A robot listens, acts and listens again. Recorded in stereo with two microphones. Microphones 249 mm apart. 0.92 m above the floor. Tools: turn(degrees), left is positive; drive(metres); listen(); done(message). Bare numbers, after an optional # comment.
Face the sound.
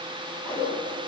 turn(30)
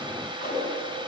# So it is at 145° left.
turn(145)
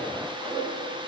done("Facing the whoosh, over 4 m away.")